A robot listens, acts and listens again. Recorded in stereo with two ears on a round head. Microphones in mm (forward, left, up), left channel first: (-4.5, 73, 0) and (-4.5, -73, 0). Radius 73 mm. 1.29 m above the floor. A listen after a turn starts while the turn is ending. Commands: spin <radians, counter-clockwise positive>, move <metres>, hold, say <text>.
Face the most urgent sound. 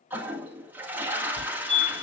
spin 0.87
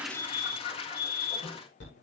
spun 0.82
spin 1.48
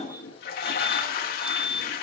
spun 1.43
say Found it: a fire alarm, straight ahead, over 4 m away.